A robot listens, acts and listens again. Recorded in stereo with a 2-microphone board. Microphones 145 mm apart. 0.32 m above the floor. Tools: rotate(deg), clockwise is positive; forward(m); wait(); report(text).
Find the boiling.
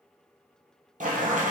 rotate(60)
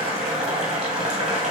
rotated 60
rotate(60)
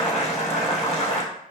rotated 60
report("Facing the boiling, 1 to 2 m away.")